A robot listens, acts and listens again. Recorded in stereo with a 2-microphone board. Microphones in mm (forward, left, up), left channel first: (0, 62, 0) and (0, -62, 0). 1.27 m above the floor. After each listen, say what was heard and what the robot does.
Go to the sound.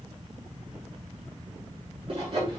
The sawing: about 50° right or 130° right. Turn 50° right.
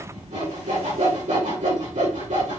So it is at 80° right. Turn 80° right.
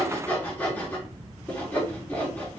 The sawing is now 15° left. Turn 15° left.
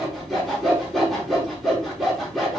Drive 1.0 m forward.
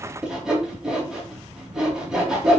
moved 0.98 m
Drive 1.0 m forward.
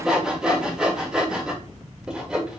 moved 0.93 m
Drive 1.0 m forward.
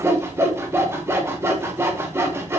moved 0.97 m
The sawing is now 20° right. Turn 20° right.
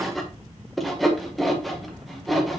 Drive 1.0 m forward.
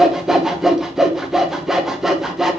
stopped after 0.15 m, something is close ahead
I am next to the sawing.